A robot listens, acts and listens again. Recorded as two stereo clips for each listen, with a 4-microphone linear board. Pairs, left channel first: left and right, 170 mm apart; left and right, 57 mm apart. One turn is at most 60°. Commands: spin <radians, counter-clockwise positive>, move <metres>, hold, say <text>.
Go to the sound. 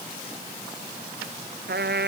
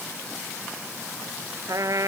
spin -1.05
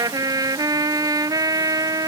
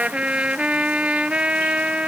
spin -0.35
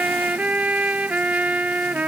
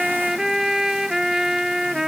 spin -0.17
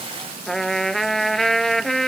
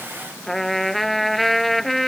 move 1.0
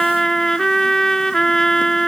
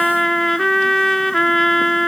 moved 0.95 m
move 1.0
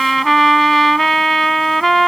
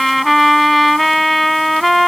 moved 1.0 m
move 1.0
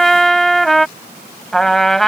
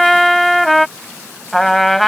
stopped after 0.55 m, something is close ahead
say Arrived at the trumpet, straight ahead.